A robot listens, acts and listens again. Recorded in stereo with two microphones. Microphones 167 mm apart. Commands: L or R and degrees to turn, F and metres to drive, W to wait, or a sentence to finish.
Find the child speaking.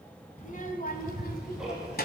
L65
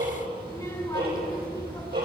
L25
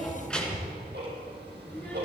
L10
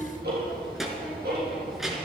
Found it: a child speaking, straight ahead.